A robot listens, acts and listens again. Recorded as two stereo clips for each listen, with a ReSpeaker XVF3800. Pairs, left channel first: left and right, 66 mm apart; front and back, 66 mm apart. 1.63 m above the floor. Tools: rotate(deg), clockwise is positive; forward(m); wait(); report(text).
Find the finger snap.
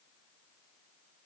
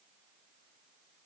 wait()
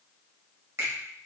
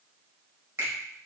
rotate(130)
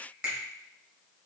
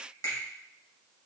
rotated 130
rotate(20)
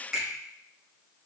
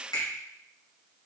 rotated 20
report("Facing the finger snap, 2 to 4 m away.")